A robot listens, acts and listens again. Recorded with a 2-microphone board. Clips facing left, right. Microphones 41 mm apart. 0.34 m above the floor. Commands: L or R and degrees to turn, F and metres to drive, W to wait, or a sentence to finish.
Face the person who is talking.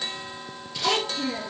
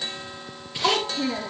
R60
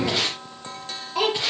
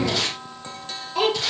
Facing the child speaking, over 4 m away.